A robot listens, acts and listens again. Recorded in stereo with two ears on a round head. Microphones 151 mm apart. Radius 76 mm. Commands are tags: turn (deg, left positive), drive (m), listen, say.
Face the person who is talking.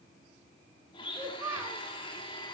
<turn deg="-15"/>
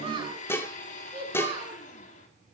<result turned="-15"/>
<turn deg="-150"/>
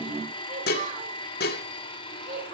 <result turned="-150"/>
<turn deg="-45"/>
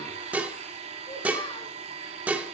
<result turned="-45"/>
<listen/>
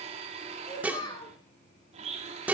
<turn deg="25"/>
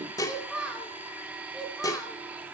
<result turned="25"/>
<say>Found it: a child speaking, straight ahead.</say>